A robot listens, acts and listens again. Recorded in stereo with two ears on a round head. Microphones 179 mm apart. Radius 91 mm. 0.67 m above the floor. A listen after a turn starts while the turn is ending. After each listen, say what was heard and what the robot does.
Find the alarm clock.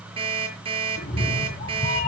The alarm clock: about 30° right or 150° right. Turn 30° right.
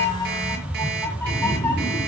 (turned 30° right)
Keep listening.
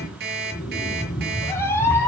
So it is at 120° right. Turn 120° right.
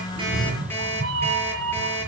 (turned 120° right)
The alarm clock is now 10° left. Turn 10° left.
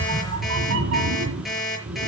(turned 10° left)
Found it: an alarm clock, straight ahead, over 4 m away.